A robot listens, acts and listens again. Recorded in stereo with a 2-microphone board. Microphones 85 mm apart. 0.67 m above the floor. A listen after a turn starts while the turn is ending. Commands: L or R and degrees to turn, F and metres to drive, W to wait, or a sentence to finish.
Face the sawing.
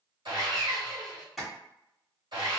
R65
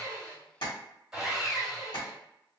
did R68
Found it: sawing, straight ahead.